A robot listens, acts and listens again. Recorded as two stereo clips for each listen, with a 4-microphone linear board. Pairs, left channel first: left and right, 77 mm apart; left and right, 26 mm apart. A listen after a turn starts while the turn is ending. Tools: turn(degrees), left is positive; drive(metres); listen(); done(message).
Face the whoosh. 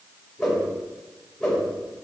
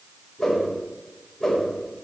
turn(degrees=30)
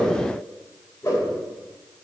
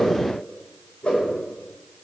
turn(degrees=140)
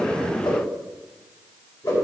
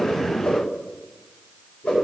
turn(degrees=60)
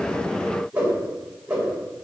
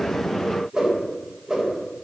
turn(degrees=-15)
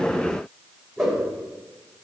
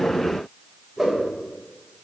done("Facing the whoosh, 2 to 4 m away.")